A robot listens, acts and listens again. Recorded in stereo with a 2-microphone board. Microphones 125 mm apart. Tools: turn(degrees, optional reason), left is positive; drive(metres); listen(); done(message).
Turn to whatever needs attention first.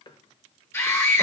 turn(degrees=20, reason="The scream: about 20° left or 160° left.")
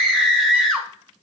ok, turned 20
done("Facing the scream.")